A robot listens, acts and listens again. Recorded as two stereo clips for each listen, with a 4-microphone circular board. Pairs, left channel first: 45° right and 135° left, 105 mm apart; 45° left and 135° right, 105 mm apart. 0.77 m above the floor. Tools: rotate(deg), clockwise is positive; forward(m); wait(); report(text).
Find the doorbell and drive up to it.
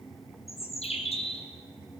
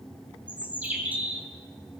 wait()
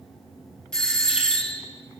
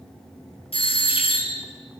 rotate(-40)
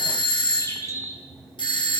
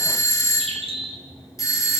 rotate(10)
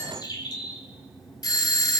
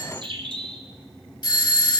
forward(1.0)
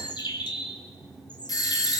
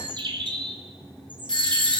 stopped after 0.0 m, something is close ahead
report("Blocked. The doorbell is further on, straight ahead.")